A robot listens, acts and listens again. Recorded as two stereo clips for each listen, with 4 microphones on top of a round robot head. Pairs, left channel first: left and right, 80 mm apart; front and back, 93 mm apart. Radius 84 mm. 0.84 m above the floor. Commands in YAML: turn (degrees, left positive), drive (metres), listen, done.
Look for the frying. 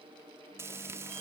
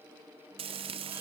turn: -155
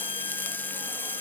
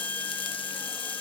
turn: 25
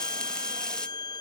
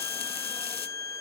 turn: 10
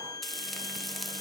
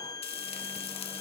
done: "Facing the frying."